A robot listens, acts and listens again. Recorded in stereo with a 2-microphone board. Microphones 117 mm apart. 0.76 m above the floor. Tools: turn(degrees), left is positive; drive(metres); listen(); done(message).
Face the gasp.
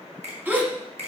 turn(degrees=-30)
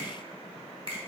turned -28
listen()
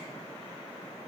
done("I heard a gasp, but can't make it out now. It was about 15° left or 135° right.")